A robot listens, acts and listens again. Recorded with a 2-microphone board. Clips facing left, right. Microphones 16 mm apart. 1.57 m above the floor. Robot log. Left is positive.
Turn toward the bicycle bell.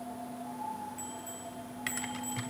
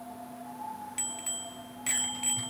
note: The bicycle bell: about 65° right or 115° right.
cmd yaw -65
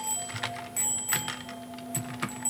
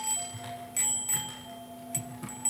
end: Found it: a bicycle bell, straight ahead, 2 to 4 m away.